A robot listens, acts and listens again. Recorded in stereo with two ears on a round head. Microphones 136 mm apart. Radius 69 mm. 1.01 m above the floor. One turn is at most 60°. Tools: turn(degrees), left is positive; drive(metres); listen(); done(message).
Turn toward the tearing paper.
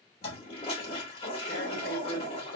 turn(degrees=60)
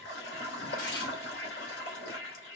turn(degrees=25)
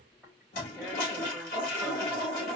done("Found it: tearing paper, straight ahead, 2 to 4 m away.")